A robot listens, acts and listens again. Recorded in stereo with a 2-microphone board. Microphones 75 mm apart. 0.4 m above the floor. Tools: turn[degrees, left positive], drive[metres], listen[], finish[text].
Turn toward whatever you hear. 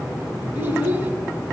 Thought: The child speaking: about 25° right or 155° right.
Action: turn[-25]
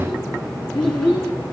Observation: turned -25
Thought: So it is at 15° left.
Action: turn[15]
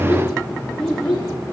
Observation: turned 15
Thought: The child speaking is now 10° left.
Action: turn[10]
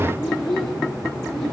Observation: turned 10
Thought: The child speaking is now 10° left.
Action: turn[10]
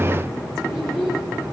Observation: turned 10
Action: finish[Found it: a child speaking, straight ahead, over 4 m away.]